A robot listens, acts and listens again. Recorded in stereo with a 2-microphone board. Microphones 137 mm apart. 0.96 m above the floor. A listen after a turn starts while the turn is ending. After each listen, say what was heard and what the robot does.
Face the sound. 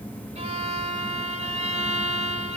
The violin: about 55° right or 125° right. Turn 55° right.
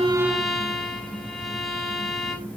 Facing the violin, 1 to 2 m away.